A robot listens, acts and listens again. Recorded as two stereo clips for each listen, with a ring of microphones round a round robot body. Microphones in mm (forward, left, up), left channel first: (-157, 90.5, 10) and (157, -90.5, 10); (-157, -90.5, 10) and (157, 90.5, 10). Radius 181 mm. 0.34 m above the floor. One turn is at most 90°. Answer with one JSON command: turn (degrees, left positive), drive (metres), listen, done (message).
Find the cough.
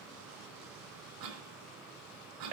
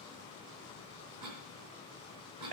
{"done": "Facing the cough."}